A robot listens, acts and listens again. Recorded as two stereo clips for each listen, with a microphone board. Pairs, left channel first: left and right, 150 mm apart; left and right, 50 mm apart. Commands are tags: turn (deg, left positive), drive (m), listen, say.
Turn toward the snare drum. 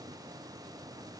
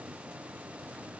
<listen/>
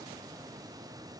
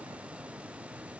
<listen/>
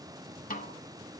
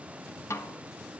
<turn deg="60"/>
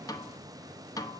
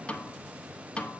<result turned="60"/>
<turn deg="25"/>
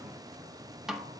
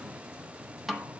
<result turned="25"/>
<say>Found it: a snare drum, straight ahead.</say>